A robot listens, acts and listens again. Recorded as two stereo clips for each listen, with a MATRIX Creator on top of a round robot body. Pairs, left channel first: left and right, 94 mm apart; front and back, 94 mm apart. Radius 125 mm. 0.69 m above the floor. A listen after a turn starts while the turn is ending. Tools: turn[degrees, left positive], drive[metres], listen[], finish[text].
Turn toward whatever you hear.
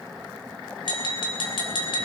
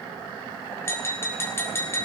Thought: The tapping: 60° left.
Action: turn[60]
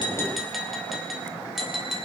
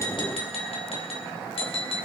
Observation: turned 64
Action: finish[Found it: tapping, straight ahead.]